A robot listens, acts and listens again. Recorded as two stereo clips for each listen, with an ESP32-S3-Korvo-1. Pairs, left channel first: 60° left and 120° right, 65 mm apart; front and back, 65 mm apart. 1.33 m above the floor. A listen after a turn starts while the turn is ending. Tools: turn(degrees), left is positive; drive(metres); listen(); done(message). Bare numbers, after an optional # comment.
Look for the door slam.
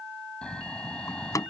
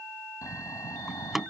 # The door slam: 95° left.
turn(95)
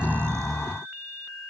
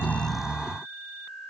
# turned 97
done("Facing where the door slam came from. I can't hear it now.")